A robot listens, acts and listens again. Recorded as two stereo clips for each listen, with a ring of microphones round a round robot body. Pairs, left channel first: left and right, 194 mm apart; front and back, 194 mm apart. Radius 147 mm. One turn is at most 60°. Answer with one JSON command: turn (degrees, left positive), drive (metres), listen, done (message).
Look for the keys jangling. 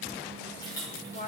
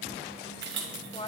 {"turn": 60}
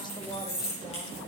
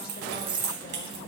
{"turn": 60}
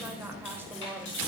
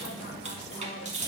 {"turn": 60}
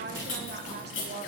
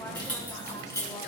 {"turn": 60}
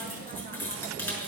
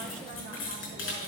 {"turn": 10}
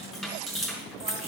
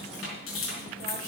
{"done": "Found it: keys jangling, straight ahead."}